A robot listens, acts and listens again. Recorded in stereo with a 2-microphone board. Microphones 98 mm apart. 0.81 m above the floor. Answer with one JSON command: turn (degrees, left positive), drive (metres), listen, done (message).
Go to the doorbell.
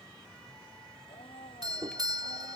{"turn": -50}
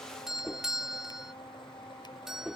{"drive": 1.0}
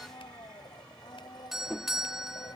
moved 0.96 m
{"drive": 1.0}
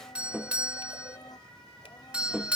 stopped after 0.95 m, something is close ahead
{"turn": -20}
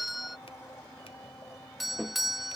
{"done": "I am next to the doorbell."}